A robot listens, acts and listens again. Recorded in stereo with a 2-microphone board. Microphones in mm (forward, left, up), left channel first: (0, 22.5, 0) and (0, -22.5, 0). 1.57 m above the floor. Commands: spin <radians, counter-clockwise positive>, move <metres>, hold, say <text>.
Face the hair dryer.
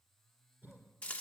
hold
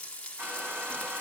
spin -0.96
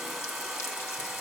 say Facing the hair dryer.